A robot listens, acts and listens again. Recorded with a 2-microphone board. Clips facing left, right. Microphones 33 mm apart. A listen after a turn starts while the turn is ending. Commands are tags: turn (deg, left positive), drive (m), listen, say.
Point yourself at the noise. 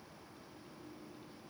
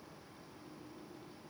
<listen/>
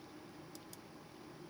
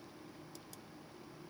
<listen/>
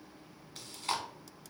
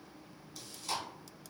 <turn deg="45"/>
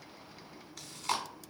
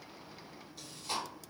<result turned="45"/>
<turn deg="90"/>
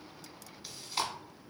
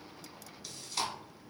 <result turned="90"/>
<turn deg="20"/>
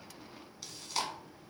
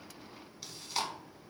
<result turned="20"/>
<say>Found it: chewing, straight ahead.</say>